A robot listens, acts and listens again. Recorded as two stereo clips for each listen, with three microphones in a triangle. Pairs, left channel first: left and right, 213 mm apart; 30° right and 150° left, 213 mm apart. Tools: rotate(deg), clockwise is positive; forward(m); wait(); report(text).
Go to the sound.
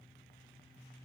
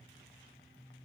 wait()
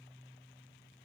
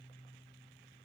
wait()
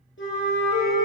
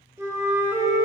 rotate(-75)
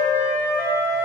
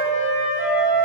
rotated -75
rotate(10)
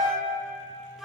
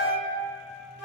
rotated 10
forward(1.0)
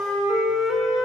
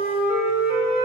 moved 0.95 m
forward(1.0)
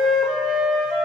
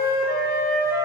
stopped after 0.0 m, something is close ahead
report("Arrived at the flute, straight ahead.")